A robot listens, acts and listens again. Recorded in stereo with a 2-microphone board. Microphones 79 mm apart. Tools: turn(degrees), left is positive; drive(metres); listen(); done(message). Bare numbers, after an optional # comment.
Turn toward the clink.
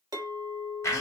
# The clink: about 55° right or 125° right.
turn(-55)
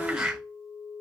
# So it is at 70° right.
turn(-70)
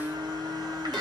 listen()
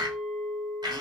done("Facing the clink.")